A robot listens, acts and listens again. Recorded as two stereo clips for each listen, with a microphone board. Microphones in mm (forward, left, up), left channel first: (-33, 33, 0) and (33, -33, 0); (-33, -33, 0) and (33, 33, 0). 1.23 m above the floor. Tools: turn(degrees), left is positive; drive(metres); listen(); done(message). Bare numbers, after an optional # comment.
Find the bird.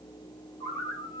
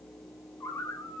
# The bird: 175° left.
turn(175)
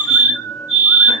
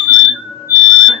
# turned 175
# The bird is now 70° left.
turn(70)
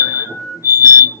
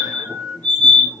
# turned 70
# The bird is now 25° right.
turn(-25)
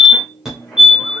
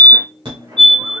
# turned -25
listen()
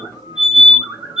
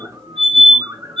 done("Found it: a bird, straight ahead.")